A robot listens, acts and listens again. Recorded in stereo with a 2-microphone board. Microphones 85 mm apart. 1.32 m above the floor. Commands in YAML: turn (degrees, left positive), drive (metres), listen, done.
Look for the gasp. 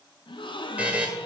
turn: 90
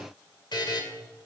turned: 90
done: "I heard a gasp from this way, but can't make it out now."